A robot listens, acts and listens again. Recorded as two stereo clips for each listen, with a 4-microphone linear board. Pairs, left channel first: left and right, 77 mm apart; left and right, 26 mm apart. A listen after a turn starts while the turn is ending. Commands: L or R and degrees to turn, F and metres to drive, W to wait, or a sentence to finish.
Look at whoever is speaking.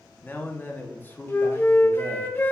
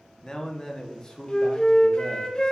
L25
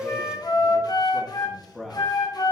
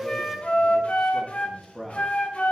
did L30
Facing the man speaking.